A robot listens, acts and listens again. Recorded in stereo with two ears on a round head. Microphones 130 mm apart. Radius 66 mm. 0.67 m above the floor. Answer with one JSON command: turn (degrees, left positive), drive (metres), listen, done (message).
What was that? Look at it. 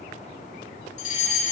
{"turn": 55}
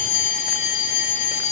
{"turn": 60}
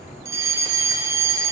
{"turn": -20}
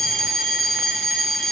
{"done": "Facing the fire alarm, 2 to 4 m away."}